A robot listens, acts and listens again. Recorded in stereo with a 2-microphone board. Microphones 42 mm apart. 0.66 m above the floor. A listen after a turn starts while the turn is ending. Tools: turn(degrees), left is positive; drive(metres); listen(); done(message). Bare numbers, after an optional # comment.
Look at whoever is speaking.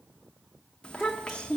# The child speaking: about 25° left or 155° left.
turn(25)
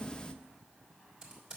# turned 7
# The child speaking: about 20° left or 160° left.
turn(20)
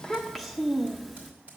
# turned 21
done("Facing the child speaking.")